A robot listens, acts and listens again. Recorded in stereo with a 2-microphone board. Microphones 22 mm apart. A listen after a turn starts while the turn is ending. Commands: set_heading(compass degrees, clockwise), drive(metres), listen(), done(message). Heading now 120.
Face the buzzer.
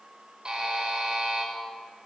set_heading(165)
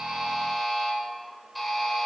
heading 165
done("Found it: a buzzer, straight ahead, over 4 m away.")